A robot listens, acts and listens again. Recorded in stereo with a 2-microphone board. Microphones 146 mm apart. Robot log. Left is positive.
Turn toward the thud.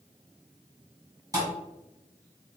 note: The thud: about 25° right or 155° right.
cmd yaw -25
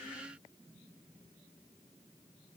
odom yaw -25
cmd idle
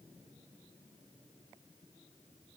end: I heard a thud, but can't make it out now. It was about straight ahead or 130° right.